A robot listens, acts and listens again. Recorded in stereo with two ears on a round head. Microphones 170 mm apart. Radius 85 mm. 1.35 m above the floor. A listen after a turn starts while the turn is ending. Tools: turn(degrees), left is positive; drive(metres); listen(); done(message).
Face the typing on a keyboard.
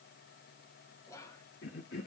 listen()
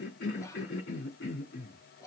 listen()
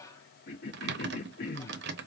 turn(degrees=-60)
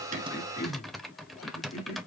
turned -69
done("Found it: typing on a keyboard, straight ahead.")